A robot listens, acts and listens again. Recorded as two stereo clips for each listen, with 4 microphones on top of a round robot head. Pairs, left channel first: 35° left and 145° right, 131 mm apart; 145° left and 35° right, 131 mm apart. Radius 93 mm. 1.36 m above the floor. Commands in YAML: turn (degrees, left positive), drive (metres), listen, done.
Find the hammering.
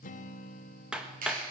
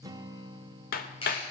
turn: 135
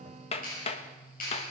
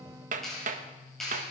done: "Facing the hammering, 1 to 2 m away."